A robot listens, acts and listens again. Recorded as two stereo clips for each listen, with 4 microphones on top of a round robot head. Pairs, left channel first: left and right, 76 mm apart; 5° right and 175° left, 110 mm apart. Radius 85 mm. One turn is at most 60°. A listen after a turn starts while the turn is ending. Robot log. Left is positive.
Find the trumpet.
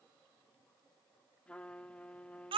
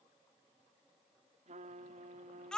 note: The trumpet: 165° left.
cmd yaw +60
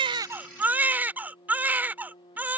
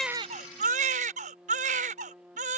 note: The trumpet is now 95° left.
cmd yaw +60
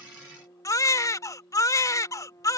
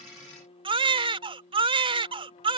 note: The trumpet is now 30° left.
cmd yaw +30
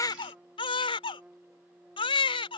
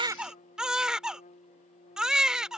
note: The trumpet is now 15° right.
cmd yaw -15
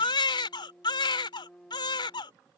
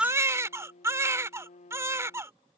end: Facing the trumpet.